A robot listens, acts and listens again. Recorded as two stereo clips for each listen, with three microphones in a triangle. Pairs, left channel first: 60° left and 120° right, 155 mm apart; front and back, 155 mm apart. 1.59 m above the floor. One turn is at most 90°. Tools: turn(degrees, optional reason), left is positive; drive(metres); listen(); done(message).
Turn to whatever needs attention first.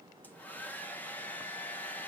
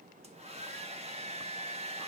listen()
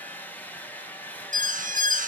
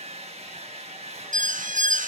turn(degrees=-90, reason="The alarm: 150° right.")
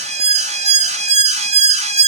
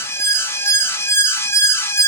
turn(degrees=-75, reason="The alarm is now 75° right.")
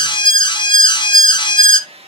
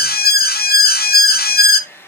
done("Found it: an alarm, straight ahead, under 1 m away.")